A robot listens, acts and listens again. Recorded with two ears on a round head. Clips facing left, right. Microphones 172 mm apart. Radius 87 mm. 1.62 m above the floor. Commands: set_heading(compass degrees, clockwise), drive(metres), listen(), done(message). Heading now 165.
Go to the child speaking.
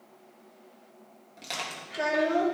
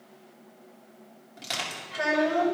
set_heading(120)
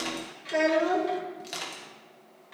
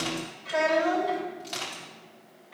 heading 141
set_heading(31)
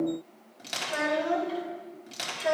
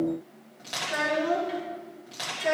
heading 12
set_heading(32)
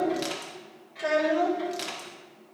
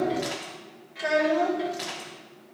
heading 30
drive(1.0)
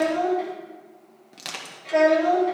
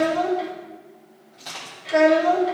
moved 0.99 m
set_heading(40)
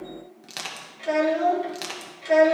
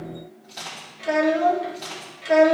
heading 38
drive(1.0)
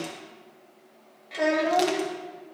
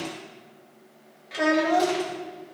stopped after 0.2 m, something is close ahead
done("I am next to the child speaking.")